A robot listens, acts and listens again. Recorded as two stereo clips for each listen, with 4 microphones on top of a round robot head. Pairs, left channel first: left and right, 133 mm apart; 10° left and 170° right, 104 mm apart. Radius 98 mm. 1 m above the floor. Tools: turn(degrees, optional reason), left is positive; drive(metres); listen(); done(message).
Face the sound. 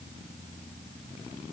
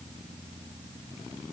listen()
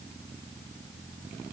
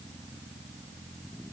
listen()
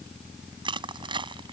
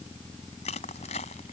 turn(degrees=-35, reason="The crushing: 35° right.")
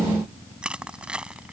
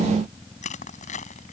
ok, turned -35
turn(degrees=-10, reason="The crushing is now 10° right.")
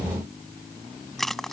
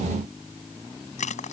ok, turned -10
done("Found it: crushing, straight ahead.")